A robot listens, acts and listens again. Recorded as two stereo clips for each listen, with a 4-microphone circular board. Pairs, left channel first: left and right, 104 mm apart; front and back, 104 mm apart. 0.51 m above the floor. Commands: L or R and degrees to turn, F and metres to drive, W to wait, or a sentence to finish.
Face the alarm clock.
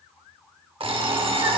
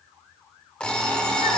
R80
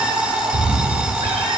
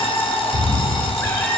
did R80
R10
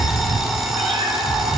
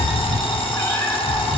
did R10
Facing the alarm clock.